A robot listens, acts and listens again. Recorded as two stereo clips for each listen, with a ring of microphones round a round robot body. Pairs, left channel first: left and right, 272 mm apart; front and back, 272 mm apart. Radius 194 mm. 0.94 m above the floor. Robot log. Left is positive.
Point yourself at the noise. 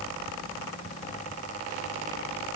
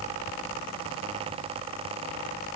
cmd idle
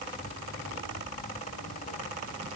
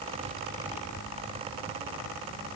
cmd idle
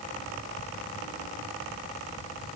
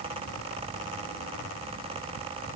end: I can't make out anything.